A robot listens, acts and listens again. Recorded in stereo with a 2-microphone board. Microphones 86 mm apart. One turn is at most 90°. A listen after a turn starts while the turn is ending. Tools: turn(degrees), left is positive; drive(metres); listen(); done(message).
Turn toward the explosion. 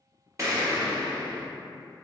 turn(degrees=-35)
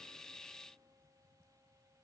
listen()
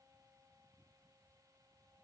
done("I heard an explosion, but can't make it out now. It was about straight ahead or 110° right.")